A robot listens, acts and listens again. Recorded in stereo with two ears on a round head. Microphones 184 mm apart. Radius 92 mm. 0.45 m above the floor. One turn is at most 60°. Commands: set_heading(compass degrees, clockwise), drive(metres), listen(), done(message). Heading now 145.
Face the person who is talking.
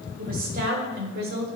set_heading(195)
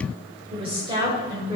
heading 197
set_heading(217)
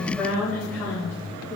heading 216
set_heading(206)
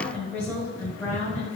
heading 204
set_heading(194)
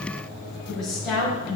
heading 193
done("Found it: a woman speaking, straight ahead.")